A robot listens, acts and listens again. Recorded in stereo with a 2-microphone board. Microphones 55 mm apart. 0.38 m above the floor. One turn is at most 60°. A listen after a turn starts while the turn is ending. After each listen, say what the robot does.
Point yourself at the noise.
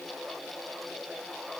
Keep listening.
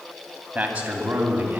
Turn 30° right.
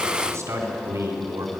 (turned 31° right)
Turn 60° right.
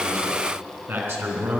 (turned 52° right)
Turn 45° right.
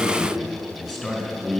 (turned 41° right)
Facing the man speaking.